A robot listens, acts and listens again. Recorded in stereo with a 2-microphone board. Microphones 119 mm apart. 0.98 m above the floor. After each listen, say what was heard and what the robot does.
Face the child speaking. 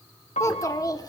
The child speaking: about 35° left or 145° left. Turn 35° left.
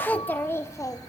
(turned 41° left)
The child speaking: about 30° left or 150° left. Turn 30° left.
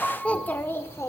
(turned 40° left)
The child speaking: about 25° left or 155° left. Turn 25° left.
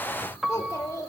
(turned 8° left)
The child speaking: about 30° left or 150° left. Turn 30° left.
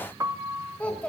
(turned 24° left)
So it is at 10° left. Turn 10° left.
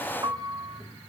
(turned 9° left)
Keep listening.
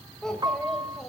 Found it: a child speaking, straight ahead, 2 to 4 m away.